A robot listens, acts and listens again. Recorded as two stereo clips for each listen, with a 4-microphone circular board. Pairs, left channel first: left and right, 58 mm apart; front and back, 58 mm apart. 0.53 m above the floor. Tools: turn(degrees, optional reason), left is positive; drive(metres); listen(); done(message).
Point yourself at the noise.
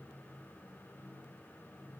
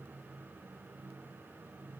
listen()
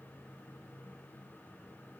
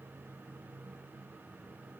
listen()
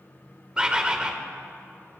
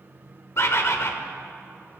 turn(degrees=-20, reason="The bird: 20° right.")
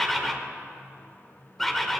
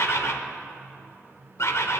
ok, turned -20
done("Facing the bird, 1 to 2 m away.")